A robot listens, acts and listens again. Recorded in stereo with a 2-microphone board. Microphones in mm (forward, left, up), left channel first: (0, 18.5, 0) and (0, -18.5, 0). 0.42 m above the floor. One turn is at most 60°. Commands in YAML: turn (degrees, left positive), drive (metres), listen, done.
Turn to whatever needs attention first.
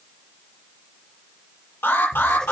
turn: 60
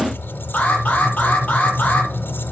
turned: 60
turn: 45
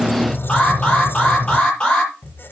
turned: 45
turn: 25
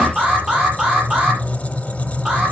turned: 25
turn: -15
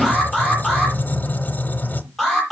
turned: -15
done: "Found it: an alarm, straight ahead."